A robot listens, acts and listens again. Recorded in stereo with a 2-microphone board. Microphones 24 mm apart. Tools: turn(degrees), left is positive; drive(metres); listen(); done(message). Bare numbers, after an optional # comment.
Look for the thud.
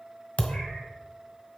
# The thud: about 55° left or 125° left.
turn(55)
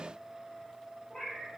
listen()
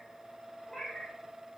done("I heard a thud, but can't make it out now. It was about straight ahead or 70° left.")